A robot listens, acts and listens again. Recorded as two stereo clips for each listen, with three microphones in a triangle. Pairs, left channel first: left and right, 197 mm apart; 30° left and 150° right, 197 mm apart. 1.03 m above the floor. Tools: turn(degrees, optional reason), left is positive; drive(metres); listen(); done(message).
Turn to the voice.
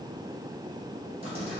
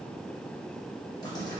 listen()
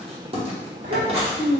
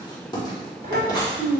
turn(degrees=-105, reason="The child speaking: 105° right.")
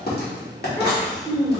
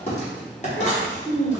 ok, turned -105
done("Found it: a child speaking, straight ahead.")